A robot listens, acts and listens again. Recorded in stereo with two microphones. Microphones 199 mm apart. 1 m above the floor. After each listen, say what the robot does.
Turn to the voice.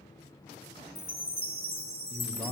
Turn 30° left.
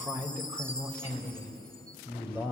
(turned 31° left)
Turn 10° right.
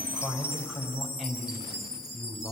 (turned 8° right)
Found it: a man speaking, straight ahead, over 4 m away.